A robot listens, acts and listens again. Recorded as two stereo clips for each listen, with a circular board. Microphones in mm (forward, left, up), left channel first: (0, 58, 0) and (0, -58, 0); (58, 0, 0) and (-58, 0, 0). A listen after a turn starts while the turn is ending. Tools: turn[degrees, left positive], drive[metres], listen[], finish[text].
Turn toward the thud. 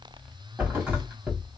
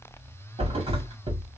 Thought: The thud: 160° right.
Action: turn[-160]
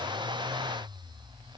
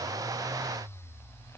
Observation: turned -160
Action: finish[Facing where the thud came from. I can't hear it now.]